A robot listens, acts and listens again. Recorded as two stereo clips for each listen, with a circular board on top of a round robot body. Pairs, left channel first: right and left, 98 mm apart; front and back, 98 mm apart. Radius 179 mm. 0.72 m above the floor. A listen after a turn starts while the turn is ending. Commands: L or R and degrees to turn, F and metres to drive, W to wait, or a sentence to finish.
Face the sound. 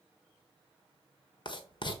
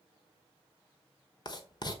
R45
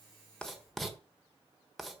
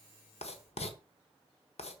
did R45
Facing the writing.